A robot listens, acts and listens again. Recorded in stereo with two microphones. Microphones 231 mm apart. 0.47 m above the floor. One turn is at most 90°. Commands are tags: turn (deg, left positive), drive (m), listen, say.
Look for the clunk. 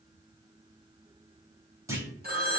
<turn deg="-30"/>
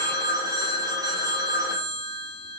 <listen/>
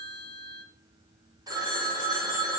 <say>I heard a clunk, but can't make it out now. It was about 20° left or 140° right.</say>